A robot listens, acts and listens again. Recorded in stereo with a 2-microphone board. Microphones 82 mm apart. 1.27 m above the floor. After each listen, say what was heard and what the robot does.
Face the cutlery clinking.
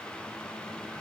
Keep listening.
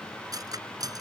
The cutlery clinking: about 50° right or 130° right. Turn 50° right.
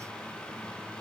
Keep listening.
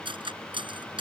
So it is at 85° right. Turn 85° right.
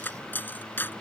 The cutlery clinking is now 25° left. Turn 25° left.
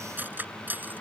The cutlery clinking is now 20° right. Turn 20° right.
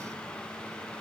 Keep listening.
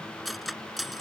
Found it: cutlery clinking, straight ahead.